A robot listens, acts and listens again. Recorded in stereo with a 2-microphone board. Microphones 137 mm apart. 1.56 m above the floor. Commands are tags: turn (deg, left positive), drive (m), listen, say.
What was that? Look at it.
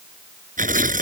<turn deg="-90"/>
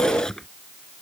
<say>Facing the tearing paper.</say>